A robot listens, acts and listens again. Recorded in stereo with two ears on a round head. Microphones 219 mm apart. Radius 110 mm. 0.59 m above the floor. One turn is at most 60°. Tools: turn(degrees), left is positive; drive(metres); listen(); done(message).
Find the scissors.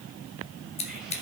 turn(degrees=25)
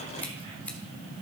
listen()
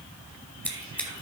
done("Found it: scissors, straight ahead, 1 to 2 m away.")